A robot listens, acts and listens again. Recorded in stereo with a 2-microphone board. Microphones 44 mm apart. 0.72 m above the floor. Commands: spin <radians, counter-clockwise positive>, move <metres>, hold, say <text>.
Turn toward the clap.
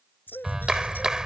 spin -0.26
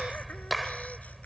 say Found it: a clap, straight ahead.